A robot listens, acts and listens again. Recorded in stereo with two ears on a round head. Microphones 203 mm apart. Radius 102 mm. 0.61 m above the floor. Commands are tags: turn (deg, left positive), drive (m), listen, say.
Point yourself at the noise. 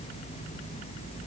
<listen/>
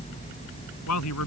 <turn deg="90"/>
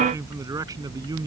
<turn deg="-15"/>
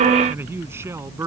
<turn deg="-15"/>
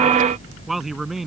<say>Found it: a man speaking, straight ahead.</say>